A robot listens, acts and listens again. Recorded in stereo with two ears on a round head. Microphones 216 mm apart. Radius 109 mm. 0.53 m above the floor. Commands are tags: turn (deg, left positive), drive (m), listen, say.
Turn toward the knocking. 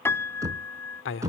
<turn deg="-30"/>
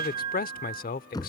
<turn deg="15"/>
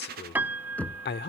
<say>Facing the knocking.</say>